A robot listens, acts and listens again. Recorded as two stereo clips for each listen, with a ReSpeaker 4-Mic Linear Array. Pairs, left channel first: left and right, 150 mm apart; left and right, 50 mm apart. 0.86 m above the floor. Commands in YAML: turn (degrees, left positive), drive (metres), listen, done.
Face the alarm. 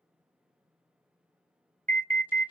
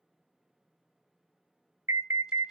turn: -60
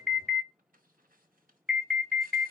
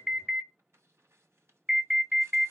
done: "Found it: an alarm, straight ahead, 1 to 2 m away."